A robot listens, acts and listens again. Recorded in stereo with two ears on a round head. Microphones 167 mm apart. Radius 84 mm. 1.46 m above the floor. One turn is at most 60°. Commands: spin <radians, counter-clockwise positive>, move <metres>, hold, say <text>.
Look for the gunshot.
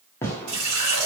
spin 0.52
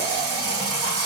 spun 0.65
hold
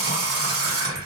say I heard a gunshot, but can't make it out now. It was about 25° right or 130° left.